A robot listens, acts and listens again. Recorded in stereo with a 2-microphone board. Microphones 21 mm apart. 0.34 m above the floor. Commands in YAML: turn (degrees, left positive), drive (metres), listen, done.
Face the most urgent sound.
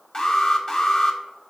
turn: 30
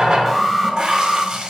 done: "Facing the alarm, under 1 m away."